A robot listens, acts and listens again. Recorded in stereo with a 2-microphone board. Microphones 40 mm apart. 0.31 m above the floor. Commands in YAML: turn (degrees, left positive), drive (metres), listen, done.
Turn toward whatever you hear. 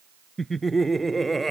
turn: 30
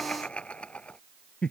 turn: 150
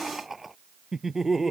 turn: -10
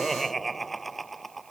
done: "Found it: laughter, straight ahead."